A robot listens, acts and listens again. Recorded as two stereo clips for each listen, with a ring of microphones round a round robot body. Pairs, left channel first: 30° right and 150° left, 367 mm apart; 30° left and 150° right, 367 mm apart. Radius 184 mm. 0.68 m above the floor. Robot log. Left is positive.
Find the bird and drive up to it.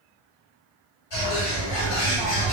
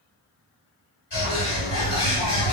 note: The bird: 25° right.
cmd yaw -25
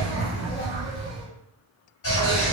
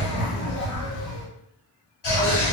cmd fwd 1.0
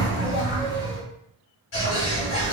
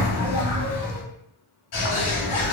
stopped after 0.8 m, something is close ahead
note: The bird is now 10° left.
cmd yaw +10
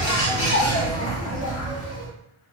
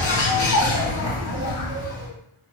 end: Arrived at the bird, straight ahead.